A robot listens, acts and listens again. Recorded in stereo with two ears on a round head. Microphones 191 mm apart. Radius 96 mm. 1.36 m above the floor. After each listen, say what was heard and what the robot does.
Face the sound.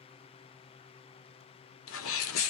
The sneeze: about 60° left or 120° left. Turn 60° left.
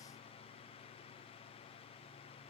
Keep listening.
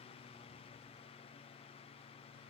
I heard a sneeze, but can't make it out now. It was about straight ahead or 60° left.